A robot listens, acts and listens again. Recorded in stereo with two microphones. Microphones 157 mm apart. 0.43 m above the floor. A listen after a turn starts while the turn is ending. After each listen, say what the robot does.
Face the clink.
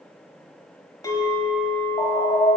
Turn 25° left.
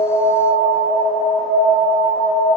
Keep listening.
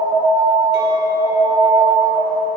Keep listening.
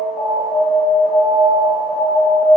I heard a clink, but can't make it out now. It was about straight ahead or 130° left.